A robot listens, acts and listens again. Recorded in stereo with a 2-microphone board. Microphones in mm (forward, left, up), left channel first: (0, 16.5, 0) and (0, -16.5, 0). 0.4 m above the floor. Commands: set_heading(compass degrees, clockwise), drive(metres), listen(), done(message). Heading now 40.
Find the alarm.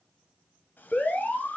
set_heading(345)
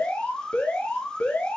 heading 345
set_heading(275)
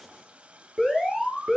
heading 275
done("Found it: an alarm, straight ahead.")